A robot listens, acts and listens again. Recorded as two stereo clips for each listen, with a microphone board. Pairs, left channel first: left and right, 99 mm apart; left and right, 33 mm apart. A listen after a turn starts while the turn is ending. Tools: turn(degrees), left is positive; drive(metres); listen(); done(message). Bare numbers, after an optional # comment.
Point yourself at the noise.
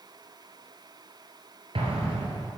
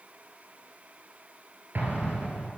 # The explosion: about 70° right or 110° right.
turn(-70)
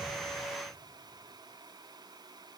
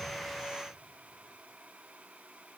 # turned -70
listen()
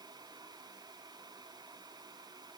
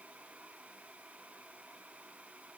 done("I heard an explosion, but can't make it out now. It was about straight ahead or 40° right.")